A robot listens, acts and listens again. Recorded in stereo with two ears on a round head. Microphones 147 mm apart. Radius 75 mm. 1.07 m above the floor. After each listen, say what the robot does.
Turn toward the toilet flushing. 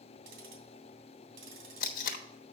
Keep listening.
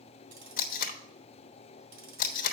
Keep listening.
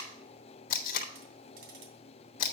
I can't make out a toilet flushing, only tape being pulled.